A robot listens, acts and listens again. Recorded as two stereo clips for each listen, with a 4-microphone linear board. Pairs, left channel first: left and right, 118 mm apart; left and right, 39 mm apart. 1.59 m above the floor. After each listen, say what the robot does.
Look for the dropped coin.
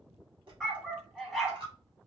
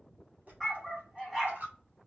Turn 45° right.
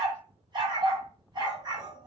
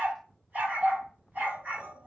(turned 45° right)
Keep listening.
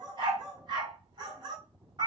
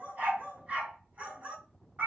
I heard a dropped coin, but can't make it out now. It was about straight ahead or 90° right.